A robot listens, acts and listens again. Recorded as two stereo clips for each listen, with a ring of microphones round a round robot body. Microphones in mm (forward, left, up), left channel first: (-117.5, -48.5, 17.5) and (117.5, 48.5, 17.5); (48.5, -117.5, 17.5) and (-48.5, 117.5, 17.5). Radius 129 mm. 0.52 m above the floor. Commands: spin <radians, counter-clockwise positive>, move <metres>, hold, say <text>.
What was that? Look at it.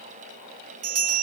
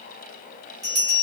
spin 0.61
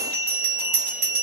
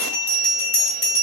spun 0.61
say Found it: a bell, straight ahead, 1 to 2 m away.